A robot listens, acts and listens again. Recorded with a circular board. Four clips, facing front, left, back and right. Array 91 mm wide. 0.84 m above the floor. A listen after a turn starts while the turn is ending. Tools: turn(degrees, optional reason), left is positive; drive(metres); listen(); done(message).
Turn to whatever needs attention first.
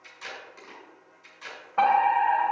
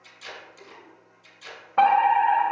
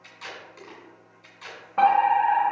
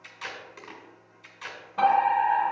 turn(degrees=90, reason="The fire alarm: 90° left.")
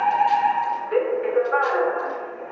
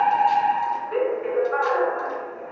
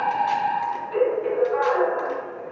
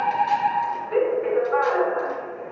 done("Facing the fire alarm, 2 to 4 m away.")